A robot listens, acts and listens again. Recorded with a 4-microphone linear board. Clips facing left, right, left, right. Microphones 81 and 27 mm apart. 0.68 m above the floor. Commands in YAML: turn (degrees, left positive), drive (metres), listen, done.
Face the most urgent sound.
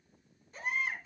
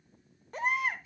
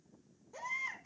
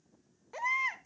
turn: -70
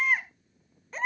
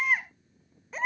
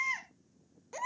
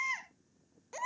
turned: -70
done: "Facing the baby crying."